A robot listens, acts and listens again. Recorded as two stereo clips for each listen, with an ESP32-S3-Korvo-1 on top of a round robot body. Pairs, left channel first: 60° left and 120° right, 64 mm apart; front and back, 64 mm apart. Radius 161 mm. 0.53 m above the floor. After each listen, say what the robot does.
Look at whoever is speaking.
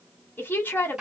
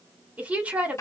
Turn 115° left.
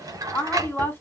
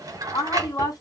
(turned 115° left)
Turn 10° left.
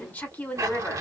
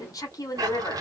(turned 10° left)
Facing the woman speaking.